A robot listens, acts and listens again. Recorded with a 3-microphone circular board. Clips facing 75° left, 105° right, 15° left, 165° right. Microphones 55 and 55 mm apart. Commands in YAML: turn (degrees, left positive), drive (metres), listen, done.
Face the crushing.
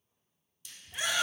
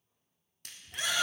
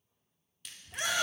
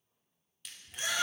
turn: -75
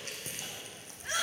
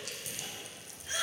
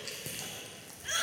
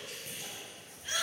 turn: 20
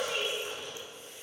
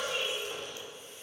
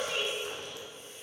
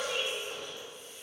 listen: true
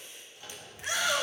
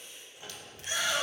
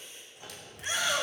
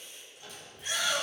listen: true
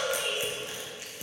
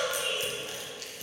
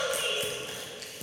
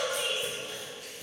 done: "Facing the crushing."